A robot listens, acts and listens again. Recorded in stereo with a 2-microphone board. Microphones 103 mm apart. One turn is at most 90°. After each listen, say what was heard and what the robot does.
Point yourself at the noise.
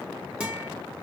Turn 30° right.
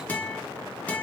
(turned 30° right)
So it is at 15° left. Turn 15° left.
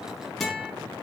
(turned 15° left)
Found it: a guitar, straight ahead, 1 to 2 m away.